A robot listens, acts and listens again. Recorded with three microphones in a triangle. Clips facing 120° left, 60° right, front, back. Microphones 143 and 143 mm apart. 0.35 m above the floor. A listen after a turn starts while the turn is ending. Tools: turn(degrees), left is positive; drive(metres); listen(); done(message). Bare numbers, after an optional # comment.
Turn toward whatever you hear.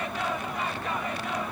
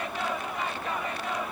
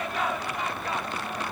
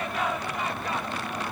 listen()
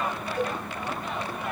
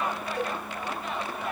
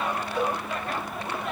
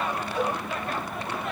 # The cowbell: 10° right.
turn(-10)
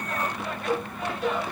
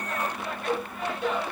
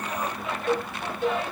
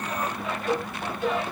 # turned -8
done("Found it: a cowbell, straight ahead.")